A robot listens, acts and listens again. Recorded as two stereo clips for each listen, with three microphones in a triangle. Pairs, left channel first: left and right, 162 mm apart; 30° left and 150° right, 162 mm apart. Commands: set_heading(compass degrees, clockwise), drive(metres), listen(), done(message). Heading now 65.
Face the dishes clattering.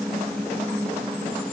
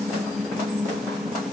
listen()
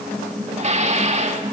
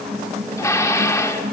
set_heading(110)
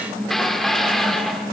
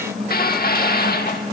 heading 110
done("Found it: dishes clattering, straight ahead.")